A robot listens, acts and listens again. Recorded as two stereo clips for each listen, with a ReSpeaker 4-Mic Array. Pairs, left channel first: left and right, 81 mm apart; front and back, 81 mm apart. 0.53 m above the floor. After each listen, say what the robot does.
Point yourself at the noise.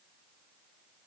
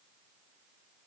Keep listening.
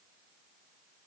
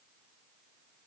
Keep listening.
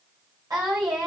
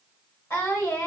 Turn 55° right.
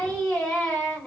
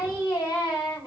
Turn 10° left.
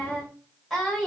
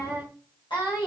Found it: singing, straight ahead, 1 to 2 m away.